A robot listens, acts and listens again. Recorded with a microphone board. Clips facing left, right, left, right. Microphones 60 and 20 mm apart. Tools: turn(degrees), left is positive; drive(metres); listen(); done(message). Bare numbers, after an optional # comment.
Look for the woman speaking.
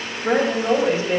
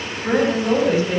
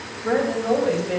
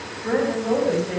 # The woman speaking: about 35° left or 145° left.
turn(35)
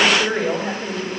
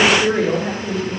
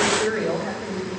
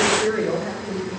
# So it is at 105° left.
turn(105)
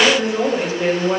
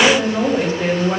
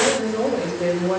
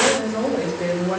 done("Found it: a woman speaking, straight ahead, 2 to 4 m away.")